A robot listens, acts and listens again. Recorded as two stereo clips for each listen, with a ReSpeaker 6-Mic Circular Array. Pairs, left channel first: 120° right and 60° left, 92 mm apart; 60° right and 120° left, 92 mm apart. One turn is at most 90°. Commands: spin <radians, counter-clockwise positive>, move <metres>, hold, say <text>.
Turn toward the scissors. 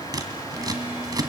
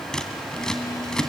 spin 0.44
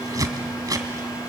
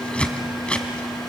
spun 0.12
spin 0.26
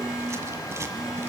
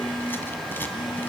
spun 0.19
hold
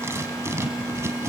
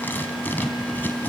say Facing the scissors.